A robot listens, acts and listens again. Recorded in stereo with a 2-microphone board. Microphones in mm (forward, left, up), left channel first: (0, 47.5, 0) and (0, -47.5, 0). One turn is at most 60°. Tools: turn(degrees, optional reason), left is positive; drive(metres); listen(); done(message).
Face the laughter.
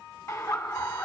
turn(degrees=35, reason="The laughter: about 35° left or 145° left.")
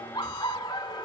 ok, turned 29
turn(degrees=60, reason="So it is at 110° left.")
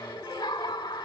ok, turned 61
turn(degrees=50, reason="The laughter is now 50° left.")
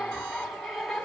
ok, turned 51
done("Facing the laughter.")